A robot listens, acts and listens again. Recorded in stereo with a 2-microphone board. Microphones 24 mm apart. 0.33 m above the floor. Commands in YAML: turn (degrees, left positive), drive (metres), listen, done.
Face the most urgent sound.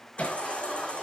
turn: 55
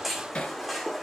done: "Facing the baby crying, over 4 m away."